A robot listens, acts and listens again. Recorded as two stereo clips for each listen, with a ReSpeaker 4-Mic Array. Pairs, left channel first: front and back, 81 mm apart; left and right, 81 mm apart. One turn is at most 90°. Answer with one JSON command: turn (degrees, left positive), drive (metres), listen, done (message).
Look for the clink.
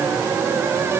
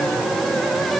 {"listen": true}
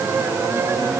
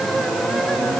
{"listen": true}
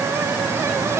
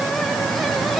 {"done": "I can't make out a clink."}